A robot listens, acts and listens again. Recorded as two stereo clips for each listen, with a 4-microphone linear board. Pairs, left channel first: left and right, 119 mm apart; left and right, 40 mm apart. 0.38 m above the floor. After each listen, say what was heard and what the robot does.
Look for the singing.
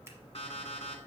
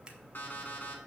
Keep listening.
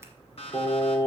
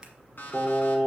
The singing: about 30° left or 150° left. Turn 30° left.
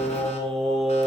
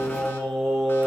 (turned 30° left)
Facing the singing.